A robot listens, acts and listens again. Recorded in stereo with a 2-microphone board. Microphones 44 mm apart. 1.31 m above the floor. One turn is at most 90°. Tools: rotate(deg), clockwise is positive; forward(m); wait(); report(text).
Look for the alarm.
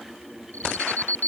rotate(-45)
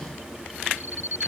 rotate(-90)
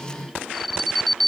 report("Found it: an alarm, straight ahead.")